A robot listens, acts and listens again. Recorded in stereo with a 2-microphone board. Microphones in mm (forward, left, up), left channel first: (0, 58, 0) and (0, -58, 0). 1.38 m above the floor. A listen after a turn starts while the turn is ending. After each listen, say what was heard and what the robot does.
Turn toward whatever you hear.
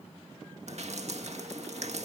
The dripping: about 65° right or 115° right. Turn 65° right.
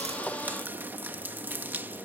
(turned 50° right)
So it is at 15° right. Turn 15° right.
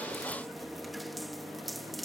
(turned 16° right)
Facing the dripping.